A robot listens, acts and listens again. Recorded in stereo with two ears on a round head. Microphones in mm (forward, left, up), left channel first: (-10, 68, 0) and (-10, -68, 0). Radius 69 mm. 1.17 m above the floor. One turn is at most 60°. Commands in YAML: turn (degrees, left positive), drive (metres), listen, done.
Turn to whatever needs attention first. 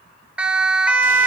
turn: -30
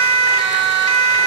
turn: -60
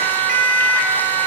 turn: -55
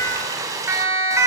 turn: -20
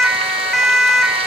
done: "Facing the siren."